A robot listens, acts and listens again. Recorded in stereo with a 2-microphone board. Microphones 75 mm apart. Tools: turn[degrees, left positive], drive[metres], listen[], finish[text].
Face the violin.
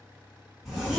Action: listen[]
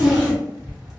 Action: listen[]
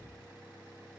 Action: finish[I can't make out a violin to turn to.]